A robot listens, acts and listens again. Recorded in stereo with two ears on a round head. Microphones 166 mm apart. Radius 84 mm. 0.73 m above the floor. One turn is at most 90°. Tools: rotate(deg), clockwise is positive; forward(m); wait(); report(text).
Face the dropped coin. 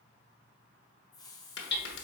rotate(-65)
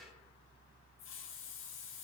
wait()
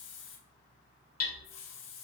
report("I heard a dropped coin, but can't make it out now. It was about straight ahead or 50° left.")